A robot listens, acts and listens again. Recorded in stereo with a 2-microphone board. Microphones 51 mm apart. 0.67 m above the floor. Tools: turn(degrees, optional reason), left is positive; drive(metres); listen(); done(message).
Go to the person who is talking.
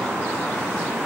listen()
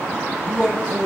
turn(degrees=30)
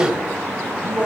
turn(degrees=-20, reason="So it is at 20° right.")
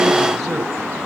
drive(metres=1.0)
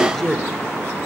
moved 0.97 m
turn(degrees=10, reason="The man speaking is now 10° left.")
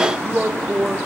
drive(metres=1.0)
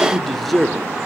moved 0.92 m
drive(metres=1.0)
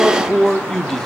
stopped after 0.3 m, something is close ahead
turn(degrees=10, reason="The man speaking is now 10° left.")
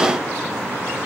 listen()
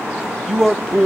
done("Arrived at the man speaking, straight ahead.")